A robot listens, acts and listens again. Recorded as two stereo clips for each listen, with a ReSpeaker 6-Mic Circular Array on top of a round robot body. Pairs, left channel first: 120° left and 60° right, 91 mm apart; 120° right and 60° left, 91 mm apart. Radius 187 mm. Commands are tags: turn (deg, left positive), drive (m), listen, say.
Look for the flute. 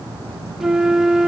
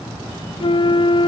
<turn deg="-145"/>
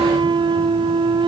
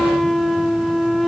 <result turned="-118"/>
<turn deg="-30"/>
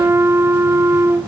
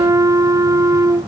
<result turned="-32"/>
<say>Facing the flute, under 1 m away.</say>